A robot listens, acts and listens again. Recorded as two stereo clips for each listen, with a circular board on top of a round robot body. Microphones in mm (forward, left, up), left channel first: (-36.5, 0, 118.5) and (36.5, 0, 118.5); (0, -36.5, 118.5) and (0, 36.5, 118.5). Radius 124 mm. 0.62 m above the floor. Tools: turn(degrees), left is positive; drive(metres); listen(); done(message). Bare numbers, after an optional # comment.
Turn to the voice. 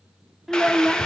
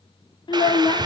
# The child speaking: 85° right.
turn(-85)
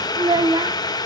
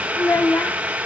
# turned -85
# The child speaking is now 30° right.
turn(-30)
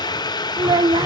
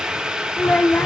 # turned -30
# The child speaking is now 20° right.
turn(-20)
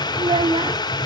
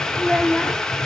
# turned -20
done("Facing the child speaking.")